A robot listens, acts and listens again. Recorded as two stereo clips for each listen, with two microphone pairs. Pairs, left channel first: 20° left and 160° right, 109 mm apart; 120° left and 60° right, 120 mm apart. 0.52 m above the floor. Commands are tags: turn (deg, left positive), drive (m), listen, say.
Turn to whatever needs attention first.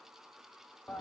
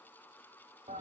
<listen/>
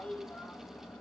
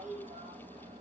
<listen/>
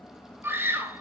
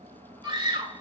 <turn deg="-95"/>
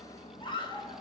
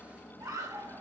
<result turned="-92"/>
<say>Facing the scream, 2 to 4 m away.</say>